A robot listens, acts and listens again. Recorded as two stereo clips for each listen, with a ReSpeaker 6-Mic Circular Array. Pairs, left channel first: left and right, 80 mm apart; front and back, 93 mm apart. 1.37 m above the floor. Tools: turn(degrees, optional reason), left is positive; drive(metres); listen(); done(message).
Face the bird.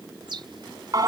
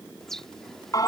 turn(degrees=-85, reason="The bird: 85° right.")
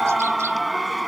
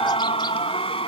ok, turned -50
turn(degrees=-35, reason="Nothing new. It was at 35° right.")
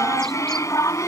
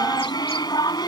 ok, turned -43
turn(degrees=10, reason="Nothing new. It was at 10° left.")
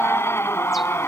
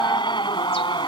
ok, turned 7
done("Facing where the bird came from. I can't hear it now.")